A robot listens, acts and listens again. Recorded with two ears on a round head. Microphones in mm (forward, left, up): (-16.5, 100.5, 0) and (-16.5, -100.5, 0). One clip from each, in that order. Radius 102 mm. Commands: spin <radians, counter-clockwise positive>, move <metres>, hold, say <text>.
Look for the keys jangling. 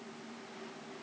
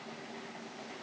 hold
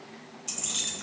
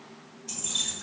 spin 1.05
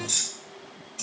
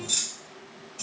spin 0.35
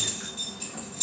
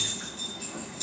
say Facing the keys jangling, 1 to 2 m away.